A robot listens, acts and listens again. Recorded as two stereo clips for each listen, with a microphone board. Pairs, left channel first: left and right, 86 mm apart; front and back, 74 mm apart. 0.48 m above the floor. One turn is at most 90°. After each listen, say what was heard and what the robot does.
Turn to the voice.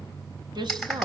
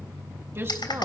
The woman speaking: 125° right. Turn 90° right.
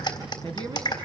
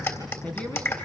The woman speaking is now 75° right. Turn 75° right.
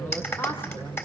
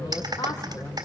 The woman speaking is now 25° left. Turn 25° left.
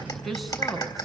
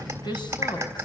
Found it: a woman speaking, straight ahead.